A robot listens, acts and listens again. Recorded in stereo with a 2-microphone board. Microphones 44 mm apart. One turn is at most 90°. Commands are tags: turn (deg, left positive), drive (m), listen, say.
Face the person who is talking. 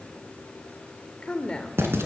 <turn deg="20"/>
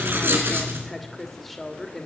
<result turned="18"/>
<say>Found it: a woman speaking, straight ahead, 2 to 4 m away.</say>